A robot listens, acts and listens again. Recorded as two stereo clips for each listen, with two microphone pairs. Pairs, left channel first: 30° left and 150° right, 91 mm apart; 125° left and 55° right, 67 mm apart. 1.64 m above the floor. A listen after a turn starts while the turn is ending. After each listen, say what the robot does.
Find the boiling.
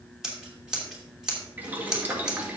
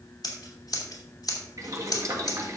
Turn 80° right.
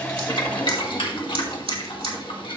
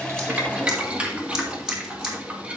Turn 10° left.
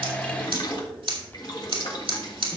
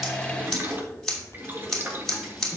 Found it: boiling, straight ahead.